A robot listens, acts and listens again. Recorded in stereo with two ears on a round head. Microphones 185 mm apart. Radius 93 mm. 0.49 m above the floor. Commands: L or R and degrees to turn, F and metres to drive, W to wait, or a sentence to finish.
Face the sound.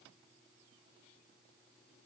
W
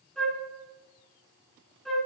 L30
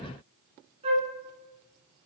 R30
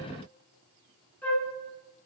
L10
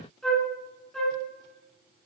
Found it: a flute, straight ahead, 2 to 4 m away.